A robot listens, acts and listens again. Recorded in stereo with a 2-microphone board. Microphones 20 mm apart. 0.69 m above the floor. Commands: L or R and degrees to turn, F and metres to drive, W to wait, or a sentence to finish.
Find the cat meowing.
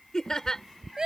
L60
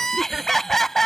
W
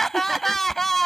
W
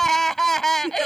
I heard a cat meowing, but can't make it out now. It was about straight ahead or 60° left.